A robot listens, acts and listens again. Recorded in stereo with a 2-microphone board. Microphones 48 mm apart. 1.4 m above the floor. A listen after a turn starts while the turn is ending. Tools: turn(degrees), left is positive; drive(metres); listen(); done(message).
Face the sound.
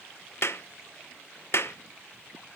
turn(degrees=60)
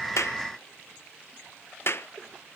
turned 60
turn(degrees=55)
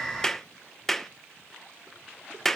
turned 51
done("Facing the clap, under 1 m away.")